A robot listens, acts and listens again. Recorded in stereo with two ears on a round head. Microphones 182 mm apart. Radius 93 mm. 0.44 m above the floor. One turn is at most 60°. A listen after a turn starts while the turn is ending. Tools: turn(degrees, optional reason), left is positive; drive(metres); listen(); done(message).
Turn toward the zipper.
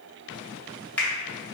listen()
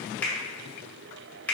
listen()
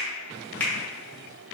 done("I can't make out a zipper, only a finger snap.")